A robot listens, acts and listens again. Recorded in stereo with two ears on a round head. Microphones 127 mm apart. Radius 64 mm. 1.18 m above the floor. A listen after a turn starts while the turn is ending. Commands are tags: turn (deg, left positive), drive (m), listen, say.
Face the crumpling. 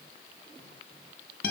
<listen/>
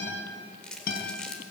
<turn deg="30"/>
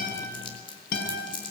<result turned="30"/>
<turn deg="140"/>
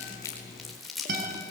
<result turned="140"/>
<say>Facing the crumpling, over 4 m away.</say>